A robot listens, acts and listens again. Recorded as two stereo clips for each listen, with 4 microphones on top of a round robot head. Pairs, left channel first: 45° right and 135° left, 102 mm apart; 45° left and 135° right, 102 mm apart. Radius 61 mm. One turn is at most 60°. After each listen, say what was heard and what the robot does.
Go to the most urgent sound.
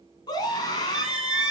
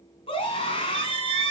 The scream: 10° left. Turn 10° left.
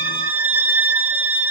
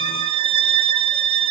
Keep listening.
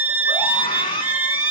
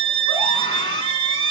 Drive 1.0 m forward.
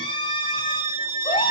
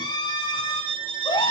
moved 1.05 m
Drive 1.0 m forward.
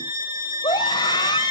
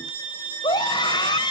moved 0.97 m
Drive 1.0 m forward.
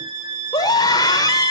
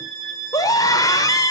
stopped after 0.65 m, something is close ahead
I am next to the scream.